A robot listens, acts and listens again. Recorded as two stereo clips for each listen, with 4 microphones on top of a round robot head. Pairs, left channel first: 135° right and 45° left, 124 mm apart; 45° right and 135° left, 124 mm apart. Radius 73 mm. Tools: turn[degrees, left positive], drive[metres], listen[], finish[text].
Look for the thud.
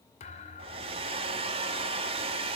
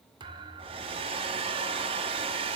Thought: The thud: 170° right.
Action: turn[-170]
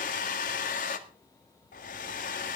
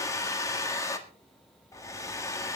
Action: finish[Facing where the thud came from. I can't hear it now.]